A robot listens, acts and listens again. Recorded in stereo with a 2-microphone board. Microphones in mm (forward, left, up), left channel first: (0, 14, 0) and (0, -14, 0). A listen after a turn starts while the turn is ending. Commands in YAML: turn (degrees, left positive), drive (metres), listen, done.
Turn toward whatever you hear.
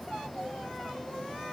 listen: true
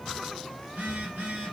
turn: -70
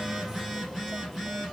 done: "Found it: a phone buzzing, straight ahead."